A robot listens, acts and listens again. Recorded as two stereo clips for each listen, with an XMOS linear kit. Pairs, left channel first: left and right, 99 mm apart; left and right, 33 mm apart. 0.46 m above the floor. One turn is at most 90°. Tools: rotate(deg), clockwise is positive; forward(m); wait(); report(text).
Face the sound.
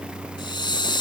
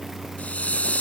rotate(-50)
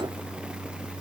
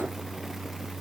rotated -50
wait()
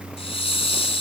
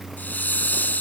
rotate(-75)
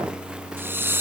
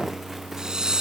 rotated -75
rotate(25)
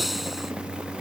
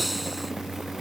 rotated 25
wait()
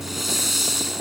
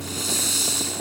report("Facing the hiss.")